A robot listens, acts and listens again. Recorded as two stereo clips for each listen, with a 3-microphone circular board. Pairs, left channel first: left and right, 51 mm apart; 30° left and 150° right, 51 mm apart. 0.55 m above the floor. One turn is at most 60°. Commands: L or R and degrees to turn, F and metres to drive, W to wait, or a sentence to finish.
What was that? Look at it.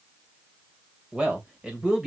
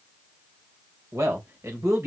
R60
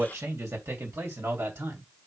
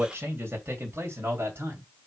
R60
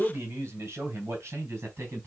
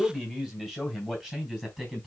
R55
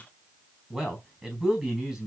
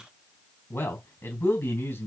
Facing the man speaking.